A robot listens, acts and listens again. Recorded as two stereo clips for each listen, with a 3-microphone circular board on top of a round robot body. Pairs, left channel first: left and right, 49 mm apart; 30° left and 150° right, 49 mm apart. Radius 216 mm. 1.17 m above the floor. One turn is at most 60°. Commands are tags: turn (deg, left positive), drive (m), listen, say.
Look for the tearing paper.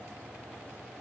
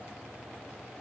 <listen/>
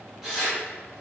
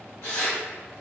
<turn deg="-10"/>
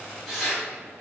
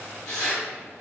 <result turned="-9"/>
<say>Found it: tearing paper, straight ahead, 1 to 2 m away.</say>